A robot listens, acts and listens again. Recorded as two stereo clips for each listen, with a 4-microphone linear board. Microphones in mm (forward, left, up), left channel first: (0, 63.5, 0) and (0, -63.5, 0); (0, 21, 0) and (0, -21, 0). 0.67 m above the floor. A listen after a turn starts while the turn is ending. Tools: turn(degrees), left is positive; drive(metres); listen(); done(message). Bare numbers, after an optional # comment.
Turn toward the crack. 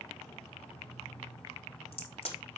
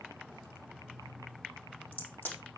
# The crack: about 50° left or 130° left.
turn(50)
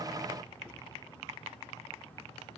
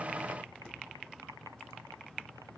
listen()
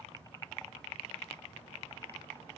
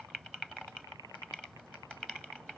done("I heard a crack, but can't make it out now. It was about straight ahead or 80° left.")